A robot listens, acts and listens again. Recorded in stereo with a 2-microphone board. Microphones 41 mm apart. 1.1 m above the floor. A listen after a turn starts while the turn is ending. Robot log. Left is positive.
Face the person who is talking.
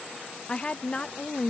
note: The woman speaking: about 30° left or 150° left.
cmd yaw +30
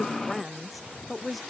end: Found it: a woman speaking, straight ahead.